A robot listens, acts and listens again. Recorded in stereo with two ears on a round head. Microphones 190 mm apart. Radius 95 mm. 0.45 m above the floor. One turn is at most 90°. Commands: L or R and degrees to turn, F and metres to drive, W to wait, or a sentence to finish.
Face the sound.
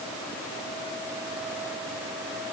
W
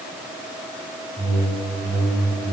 R30
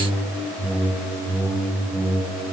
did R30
Found it: a whoosh, straight ahead, 1 to 2 m away.